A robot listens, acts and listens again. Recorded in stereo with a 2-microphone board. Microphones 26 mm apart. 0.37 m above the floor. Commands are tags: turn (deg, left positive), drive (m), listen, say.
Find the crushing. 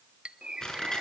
<turn deg="30"/>
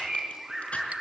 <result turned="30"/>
<listen/>
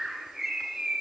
<listen/>
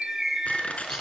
<turn deg="120"/>
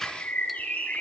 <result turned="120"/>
<listen/>
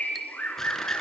<listen/>
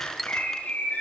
<say>I heard crushing from this way, but can't make it out now.</say>